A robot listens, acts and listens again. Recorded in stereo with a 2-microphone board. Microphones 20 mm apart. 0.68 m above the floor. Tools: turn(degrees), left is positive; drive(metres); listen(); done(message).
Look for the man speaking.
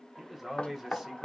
turn(degrees=-30)
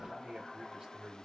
turn(degrees=-155)
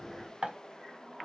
listen()
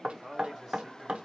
turn(degrees=-25)
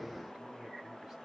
listen()
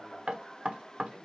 listen()
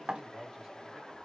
turn(degrees=-25)
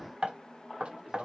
turn(degrees=-25)
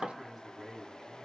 done("Facing the man speaking, 2 to 4 m away.")